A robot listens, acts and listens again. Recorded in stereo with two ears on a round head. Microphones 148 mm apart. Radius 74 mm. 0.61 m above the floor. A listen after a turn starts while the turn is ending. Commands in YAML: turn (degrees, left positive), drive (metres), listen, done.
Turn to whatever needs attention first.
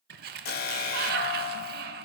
turn: 60
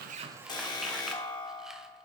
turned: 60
turn: 30
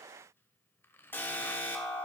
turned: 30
turn: 15
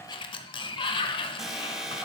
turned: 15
done: "Facing the alarm, 1 to 2 m away."